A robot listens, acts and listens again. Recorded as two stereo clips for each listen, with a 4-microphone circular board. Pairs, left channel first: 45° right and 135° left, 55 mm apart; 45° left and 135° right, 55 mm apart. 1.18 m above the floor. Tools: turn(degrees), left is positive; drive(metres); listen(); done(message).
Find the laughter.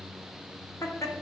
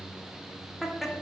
turn(degrees=-45)
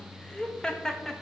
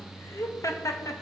turn(degrees=40)
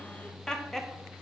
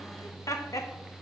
turn(degrees=40)
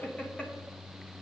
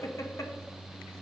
turn(degrees=25)
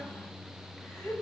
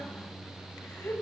done("Found it: laughter, straight ahead.")